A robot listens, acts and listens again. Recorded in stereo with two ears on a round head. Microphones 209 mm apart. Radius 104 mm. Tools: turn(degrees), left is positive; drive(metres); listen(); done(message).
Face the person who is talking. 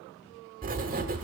listen()
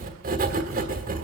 listen()
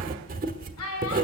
turn(degrees=90)
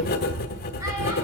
listen()
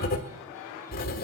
listen()
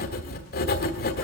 done("Facing where the child speaking came from. I can't hear it now.")